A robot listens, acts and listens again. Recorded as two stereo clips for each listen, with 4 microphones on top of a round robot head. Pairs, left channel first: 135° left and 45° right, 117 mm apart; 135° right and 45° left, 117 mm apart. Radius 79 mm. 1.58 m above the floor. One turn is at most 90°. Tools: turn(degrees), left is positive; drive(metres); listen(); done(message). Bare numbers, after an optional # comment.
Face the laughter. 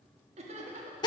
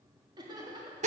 # The laughter: 10° right.
turn(-10)
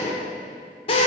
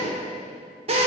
listen()
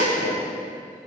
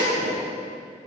listen()
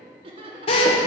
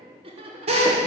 done("Found it: laughter, straight ahead.")